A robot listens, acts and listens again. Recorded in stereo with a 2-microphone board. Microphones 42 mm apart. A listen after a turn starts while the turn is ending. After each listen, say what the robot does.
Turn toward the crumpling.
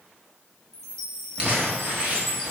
Turn 30° right.
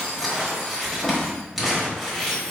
Found it: crumpling, straight ahead, 1 to 2 m away.